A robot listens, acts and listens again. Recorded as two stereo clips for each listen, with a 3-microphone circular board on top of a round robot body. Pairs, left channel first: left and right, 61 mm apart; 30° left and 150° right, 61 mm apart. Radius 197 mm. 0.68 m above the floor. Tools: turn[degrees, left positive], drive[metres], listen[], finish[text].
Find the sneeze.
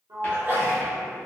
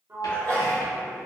Thought: The sneeze: 30° right.
Action: turn[-30]
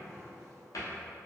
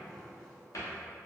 Action: finish[I heard a sneeze from this way, but can't make it out now.]